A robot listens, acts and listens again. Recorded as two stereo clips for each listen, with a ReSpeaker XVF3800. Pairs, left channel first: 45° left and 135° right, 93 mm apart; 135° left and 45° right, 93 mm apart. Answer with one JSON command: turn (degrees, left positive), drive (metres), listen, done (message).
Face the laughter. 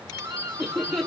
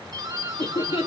{"turn": 130}
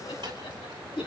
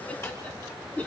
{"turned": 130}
{"turn": 65}
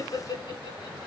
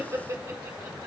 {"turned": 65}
{"turn": 10}
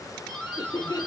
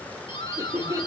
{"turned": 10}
{"done": "Found it: laughter, straight ahead, 2 to 4 m away."}